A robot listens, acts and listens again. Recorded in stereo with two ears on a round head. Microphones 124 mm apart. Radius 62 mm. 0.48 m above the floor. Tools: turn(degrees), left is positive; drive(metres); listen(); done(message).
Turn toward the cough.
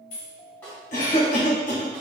turn(degrees=60)
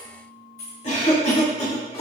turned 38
turn(degrees=55)
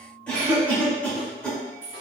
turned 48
turn(degrees=10)
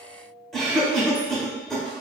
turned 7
done("Facing the cough.")